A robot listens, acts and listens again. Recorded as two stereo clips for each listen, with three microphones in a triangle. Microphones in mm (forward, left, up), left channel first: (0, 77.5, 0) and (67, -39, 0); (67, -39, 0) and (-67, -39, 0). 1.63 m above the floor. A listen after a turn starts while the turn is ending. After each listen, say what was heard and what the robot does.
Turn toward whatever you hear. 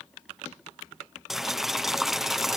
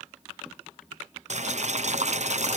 The boiling: 150° right. Turn 150° right.
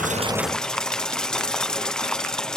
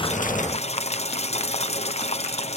The boiling is now 35° left. Turn 35° left.
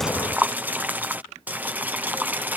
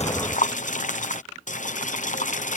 The boiling is now 20° left. Turn 20° left.
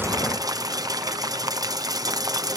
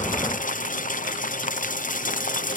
Found it: boiling, straight ahead.